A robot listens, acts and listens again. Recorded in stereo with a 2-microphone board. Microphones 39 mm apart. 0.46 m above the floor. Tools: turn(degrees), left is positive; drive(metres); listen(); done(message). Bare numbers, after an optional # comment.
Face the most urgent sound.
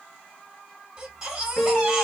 # The baby crying: about 25° right or 155° right.
turn(-25)
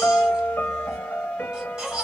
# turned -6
# The baby crying: about 20° right or 160° right.
turn(-20)
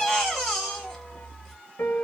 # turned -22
done("Facing the baby crying.")